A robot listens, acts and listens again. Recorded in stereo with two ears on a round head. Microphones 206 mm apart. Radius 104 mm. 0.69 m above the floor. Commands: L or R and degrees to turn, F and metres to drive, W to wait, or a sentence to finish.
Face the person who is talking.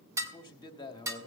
L20
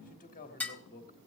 L135
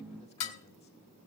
W
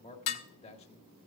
L30
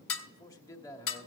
L15
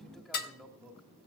Facing the man speaking, 1 to 2 m away.